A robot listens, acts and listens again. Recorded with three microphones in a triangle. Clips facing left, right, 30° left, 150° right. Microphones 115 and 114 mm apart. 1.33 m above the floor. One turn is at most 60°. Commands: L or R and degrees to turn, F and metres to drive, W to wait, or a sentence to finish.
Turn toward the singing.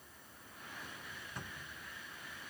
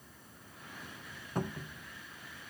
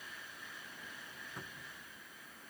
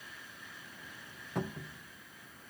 W
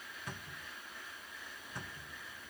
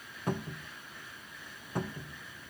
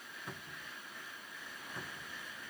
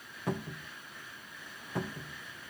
W
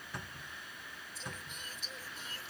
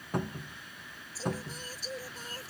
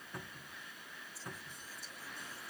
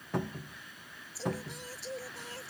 R60
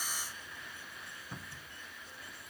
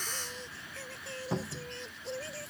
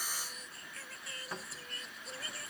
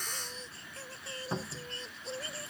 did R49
R60
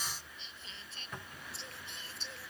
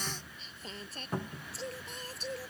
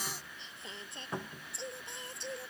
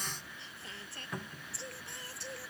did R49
R40
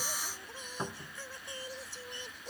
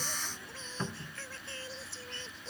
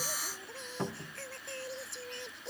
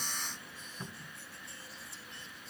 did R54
L15
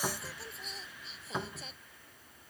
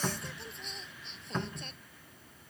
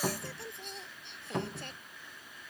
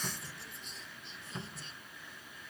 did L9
Facing the singing.